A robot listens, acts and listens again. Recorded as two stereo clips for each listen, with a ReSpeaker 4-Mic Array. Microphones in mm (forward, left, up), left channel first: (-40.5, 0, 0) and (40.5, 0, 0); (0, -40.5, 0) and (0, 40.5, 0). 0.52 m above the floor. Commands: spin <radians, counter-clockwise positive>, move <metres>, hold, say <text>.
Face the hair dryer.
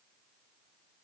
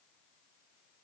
hold
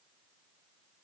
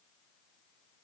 hold
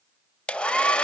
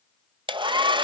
spin 1.83
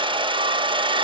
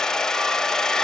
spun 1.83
spin -0.17
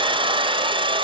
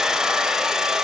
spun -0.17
say Found it: a hair dryer, straight ahead, under 1 m away.